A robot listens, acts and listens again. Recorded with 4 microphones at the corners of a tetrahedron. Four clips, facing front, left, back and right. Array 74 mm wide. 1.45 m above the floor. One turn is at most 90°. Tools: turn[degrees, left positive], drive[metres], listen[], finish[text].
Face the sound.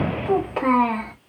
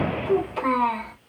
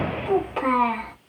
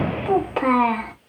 Thought: The child speaking: 75° right.
Action: turn[-75]
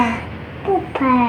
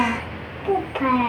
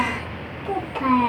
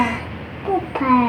Thought: The child speaking is now 30° right.
Action: turn[-30]
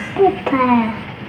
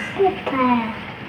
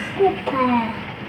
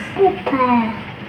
Thought: The child speaking is now 30° right.
Action: turn[-30]
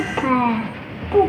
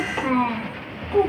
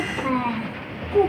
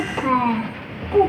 Thought: The child speaking is now 20° right.
Action: turn[-20]
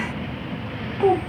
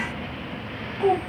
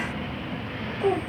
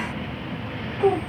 Thought: The child speaking is now 10° right.
Action: turn[-10]
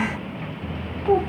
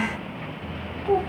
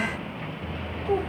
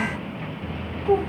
Action: finish[Facing the child speaking.]